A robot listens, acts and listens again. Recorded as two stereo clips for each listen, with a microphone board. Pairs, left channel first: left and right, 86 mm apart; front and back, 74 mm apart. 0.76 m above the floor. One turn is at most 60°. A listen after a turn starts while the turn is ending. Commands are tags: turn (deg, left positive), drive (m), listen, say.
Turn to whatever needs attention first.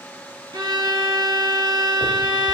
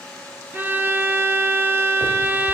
<listen/>
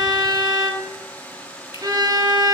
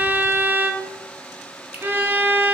<listen/>
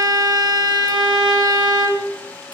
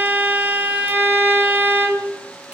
<say>I can't make out anything urgent to turn to.</say>